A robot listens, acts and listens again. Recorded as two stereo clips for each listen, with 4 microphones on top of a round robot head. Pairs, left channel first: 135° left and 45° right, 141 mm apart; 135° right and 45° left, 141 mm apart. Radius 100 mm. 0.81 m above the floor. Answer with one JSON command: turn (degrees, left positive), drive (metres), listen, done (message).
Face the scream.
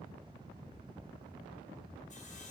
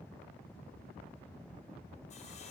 {"listen": true}
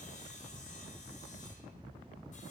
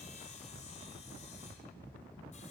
{"listen": true}
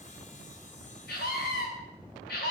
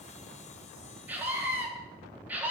{"turn": 125}
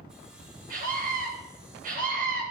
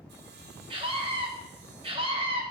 {"turn": -15}
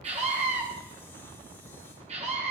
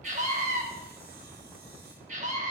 {"done": "Found it: a scream, straight ahead, over 4 m away."}